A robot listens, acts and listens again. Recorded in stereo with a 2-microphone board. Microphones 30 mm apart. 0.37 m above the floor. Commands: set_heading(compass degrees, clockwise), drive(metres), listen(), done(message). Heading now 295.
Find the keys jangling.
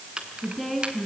set_heading(330)
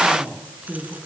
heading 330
listen()
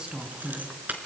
set_heading(75)
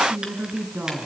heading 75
listen()
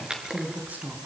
set_heading(100)
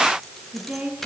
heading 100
done("Found it: keys jangling, straight ahead.")